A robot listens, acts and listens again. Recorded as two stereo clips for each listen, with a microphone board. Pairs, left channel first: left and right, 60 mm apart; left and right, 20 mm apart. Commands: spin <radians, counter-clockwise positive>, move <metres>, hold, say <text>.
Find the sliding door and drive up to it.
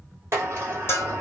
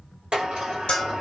spin -0.79
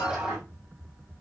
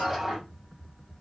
spin -0.26
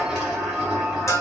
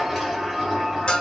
move 1.0
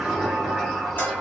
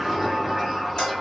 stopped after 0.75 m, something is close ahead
say Arrived at the sliding door, straight ahead.